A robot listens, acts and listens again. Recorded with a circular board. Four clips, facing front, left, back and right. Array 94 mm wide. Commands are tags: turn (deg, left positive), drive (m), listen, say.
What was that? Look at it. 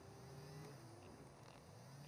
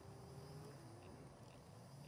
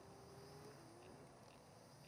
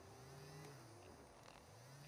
<listen/>
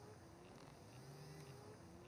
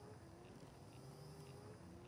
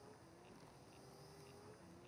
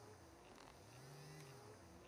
<listen/>
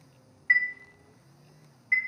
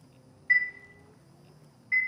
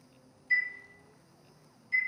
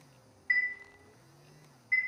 <say>Found it: a chime, straight ahead, 1 to 2 m away.</say>